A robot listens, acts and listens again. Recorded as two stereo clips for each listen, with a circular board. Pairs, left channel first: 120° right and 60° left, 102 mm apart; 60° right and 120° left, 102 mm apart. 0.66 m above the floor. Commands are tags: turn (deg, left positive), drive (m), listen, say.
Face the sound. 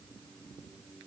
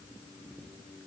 <listen/>
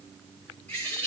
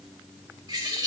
<turn deg="165"/>
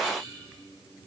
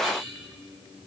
<turn deg="35"/>
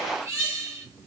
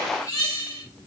<say>Facing the bird.</say>